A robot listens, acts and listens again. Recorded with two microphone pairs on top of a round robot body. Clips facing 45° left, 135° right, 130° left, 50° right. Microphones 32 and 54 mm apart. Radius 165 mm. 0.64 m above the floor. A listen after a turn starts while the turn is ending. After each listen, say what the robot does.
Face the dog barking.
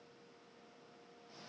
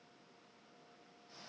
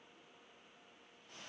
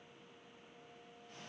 Keep listening.
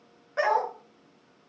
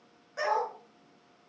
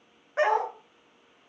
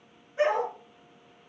Turn 105° left.
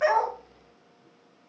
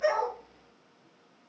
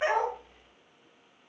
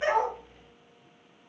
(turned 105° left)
Keep listening.
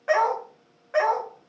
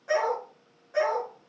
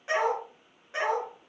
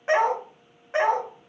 Found it: a dog barking, straight ahead, 2 to 4 m away.